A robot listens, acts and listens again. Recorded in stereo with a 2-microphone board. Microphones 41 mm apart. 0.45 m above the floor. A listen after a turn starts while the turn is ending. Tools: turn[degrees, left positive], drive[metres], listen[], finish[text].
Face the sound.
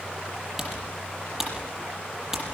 Action: turn[-30]
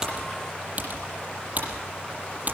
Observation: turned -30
Thought: So it is at 140° right.
Action: turn[-140]
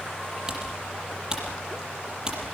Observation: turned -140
Thought: The typing on a keyboard is now 15° right.
Action: turn[-15]
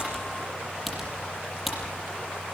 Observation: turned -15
Action: finish[Found it: typing on a keyboard, straight ahead.]